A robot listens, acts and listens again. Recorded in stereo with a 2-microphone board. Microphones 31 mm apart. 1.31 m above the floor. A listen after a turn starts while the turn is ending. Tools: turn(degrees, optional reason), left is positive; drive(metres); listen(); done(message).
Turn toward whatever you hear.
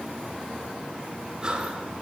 turn(degrees=-25, reason="The breathing: about 25° right or 155° right.")
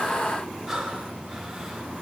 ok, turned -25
done("Facing the breathing.")